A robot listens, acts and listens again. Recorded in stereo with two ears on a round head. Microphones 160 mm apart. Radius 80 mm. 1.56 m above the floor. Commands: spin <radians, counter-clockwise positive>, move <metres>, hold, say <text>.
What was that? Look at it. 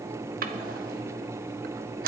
spin -0.87
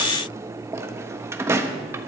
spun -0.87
spin -0.35
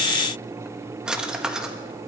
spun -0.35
say Facing the drawer.